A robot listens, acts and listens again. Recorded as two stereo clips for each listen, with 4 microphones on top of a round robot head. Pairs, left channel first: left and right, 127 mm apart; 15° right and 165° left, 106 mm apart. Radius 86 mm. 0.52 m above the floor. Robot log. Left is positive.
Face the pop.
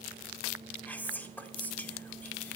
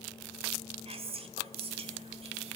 cmd idle
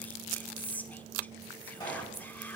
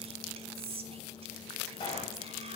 note: The pop: 30° left.
cmd yaw +30
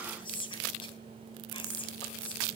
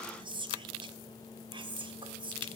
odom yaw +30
end: I heard a pop from this way, but can't make it out now.